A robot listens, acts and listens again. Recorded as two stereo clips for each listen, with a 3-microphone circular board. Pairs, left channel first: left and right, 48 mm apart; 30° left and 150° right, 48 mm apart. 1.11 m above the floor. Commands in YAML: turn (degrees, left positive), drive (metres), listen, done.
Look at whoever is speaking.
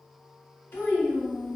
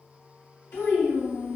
turn: 50
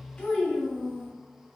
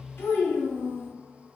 turn: 15
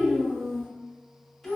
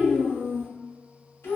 done: "Facing the child speaking."